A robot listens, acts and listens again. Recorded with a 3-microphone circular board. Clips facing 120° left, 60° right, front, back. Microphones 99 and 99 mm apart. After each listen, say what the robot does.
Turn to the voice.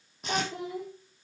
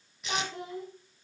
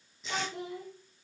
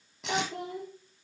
Turn 160° right.
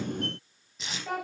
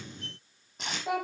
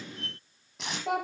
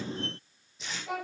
Turn 15° left.
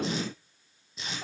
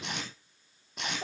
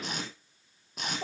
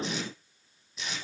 Found it: a child speaking, straight ahead, over 4 m away.